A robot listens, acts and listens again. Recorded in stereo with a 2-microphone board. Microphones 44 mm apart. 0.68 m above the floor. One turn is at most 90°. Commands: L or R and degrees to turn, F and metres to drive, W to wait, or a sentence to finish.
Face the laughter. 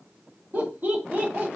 R55
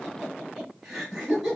R20
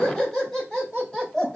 Found it: laughter, straight ahead, 2 to 4 m away.